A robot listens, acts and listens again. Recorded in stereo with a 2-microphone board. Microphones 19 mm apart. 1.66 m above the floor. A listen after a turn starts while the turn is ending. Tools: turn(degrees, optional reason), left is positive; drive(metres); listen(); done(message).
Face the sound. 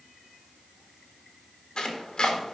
turn(degrees=55, reason="The chopping: about 55° left or 125° left.")
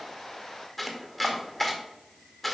turn(degrees=10, reason="So it is at 10° left.")
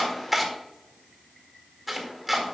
done("Facing the chopping.")